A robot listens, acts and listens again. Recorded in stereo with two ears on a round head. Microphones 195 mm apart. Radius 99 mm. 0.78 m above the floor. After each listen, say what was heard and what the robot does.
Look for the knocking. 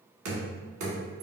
The knocking: about 65° right or 115° right. Turn 65° right.
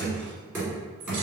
So it is at 10° right. Turn 10° right.
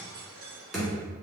Facing the knocking.